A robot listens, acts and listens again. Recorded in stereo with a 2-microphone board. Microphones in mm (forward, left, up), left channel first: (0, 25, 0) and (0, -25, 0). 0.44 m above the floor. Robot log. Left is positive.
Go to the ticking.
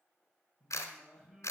cmd idle
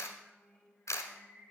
cmd idle
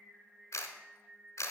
end: I can't make out ticking, only singing and a camera shutter.